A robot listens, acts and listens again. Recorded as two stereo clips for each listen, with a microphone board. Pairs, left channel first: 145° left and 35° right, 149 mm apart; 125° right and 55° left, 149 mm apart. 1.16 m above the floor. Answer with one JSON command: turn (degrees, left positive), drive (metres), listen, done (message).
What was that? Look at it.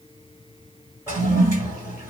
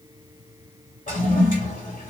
{"turn": -105}
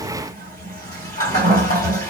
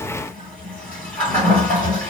{"turn": -45}
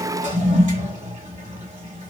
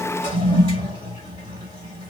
{"done": "Found it: a toilet flushing, straight ahead, 1 to 2 m away."}